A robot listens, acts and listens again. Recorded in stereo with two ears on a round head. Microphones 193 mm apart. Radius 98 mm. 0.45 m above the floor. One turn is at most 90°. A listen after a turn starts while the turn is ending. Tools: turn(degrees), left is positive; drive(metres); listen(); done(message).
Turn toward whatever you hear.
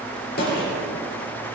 turn(degrees=45)
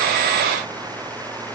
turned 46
listen()
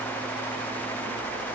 done("I heard a gunshot, but can't make it out now. It was about straight ahead or 90° left.")